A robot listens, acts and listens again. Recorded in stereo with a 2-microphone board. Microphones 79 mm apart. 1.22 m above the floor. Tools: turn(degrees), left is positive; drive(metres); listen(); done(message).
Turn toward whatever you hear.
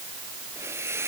turn(degrees=-35)
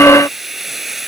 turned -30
done("Found it: a hiss, straight ahead.")